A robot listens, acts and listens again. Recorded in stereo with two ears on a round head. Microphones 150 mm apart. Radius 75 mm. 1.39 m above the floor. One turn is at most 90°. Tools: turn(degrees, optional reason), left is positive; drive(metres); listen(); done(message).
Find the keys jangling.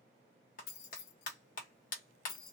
turn(degrees=60, reason="The keys jangling: about 60° left or 120° left.")
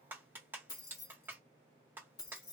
turn(degrees=25, reason="So it is at 25° left.")
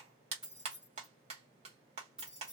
done("Found it: keys jangling, straight ahead, 1 to 2 m away.")